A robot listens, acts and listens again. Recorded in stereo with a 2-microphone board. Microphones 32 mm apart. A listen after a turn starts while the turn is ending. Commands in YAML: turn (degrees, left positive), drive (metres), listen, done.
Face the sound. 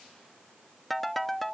turn: 30
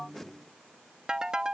turn: -25
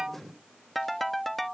done: "Found it: a ringtone, straight ahead."